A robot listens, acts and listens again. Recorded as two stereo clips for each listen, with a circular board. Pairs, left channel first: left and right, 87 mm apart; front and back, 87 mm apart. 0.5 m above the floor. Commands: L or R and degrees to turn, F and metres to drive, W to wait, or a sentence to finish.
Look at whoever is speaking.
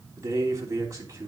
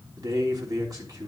R140
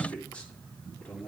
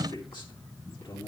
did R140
L15
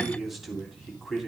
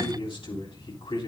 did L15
Found it: a man speaking, straight ahead.